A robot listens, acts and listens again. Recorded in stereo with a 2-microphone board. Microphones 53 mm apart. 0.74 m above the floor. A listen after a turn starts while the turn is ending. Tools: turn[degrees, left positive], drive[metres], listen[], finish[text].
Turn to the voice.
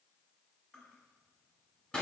Action: listen[]
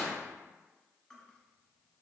Action: listen[]
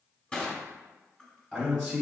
Action: turn[30]
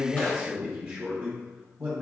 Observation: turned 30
Thought: So it is at 15° right.
Action: turn[-15]
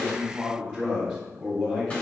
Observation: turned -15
Action: finish[Found it: a man speaking, straight ahead, 1 to 2 m away.]